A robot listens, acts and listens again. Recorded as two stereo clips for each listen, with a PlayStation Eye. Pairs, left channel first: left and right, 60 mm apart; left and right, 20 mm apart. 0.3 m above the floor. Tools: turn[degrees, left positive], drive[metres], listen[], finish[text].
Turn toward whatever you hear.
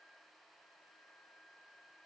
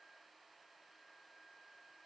Action: listen[]
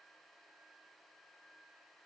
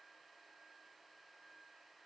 Action: listen[]
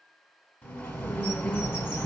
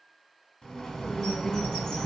Thought: The bird: about 35° left or 145° left.
Action: turn[35]
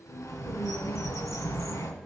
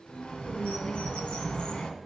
Thought: So it is at 110° left.
Action: turn[110]
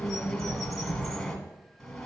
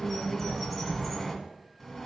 Action: finish[Found it: a bird, straight ahead, 1 to 2 m away.]